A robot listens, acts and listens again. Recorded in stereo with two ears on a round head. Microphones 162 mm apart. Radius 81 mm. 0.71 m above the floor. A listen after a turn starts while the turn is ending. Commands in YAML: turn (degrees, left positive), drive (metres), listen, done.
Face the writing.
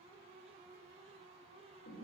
listen: true
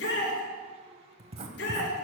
turn: -30
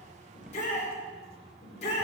done: "Facing the writing."